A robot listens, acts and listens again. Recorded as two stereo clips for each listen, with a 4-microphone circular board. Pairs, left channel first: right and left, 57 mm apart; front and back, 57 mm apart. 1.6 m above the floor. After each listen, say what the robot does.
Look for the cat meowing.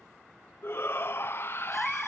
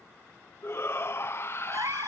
Turn 175° right.
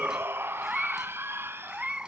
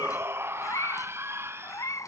Turn 15° left.
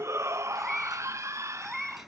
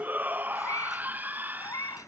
Facing the cat meowing.